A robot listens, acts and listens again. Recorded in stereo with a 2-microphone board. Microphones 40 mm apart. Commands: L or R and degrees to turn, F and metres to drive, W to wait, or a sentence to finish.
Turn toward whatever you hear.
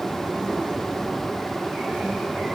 W
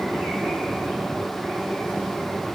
W
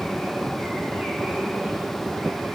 I can't make out anything.